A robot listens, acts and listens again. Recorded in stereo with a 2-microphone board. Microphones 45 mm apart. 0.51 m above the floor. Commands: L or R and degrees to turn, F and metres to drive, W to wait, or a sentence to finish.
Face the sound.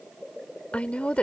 L30
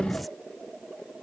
W
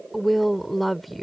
Found it: a woman speaking, straight ahead.